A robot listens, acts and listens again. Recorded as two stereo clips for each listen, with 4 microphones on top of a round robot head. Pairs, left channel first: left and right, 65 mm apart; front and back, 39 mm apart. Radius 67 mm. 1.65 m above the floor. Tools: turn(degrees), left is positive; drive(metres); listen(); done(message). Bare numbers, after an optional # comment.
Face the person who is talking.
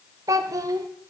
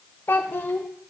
# The child speaking: 55° right.
turn(-55)
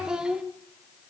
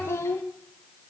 # The child speaking is now 10° right.
turn(-10)
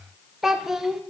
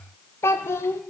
done("Facing the child speaking.")